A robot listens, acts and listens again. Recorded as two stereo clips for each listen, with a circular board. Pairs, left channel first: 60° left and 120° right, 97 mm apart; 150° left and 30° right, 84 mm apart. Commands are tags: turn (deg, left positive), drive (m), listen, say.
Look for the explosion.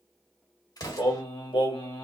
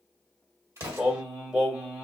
<turn deg="15"/>
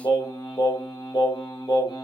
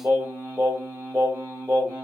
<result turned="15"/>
<say>I heard an explosion from this way, but can't make it out now.</say>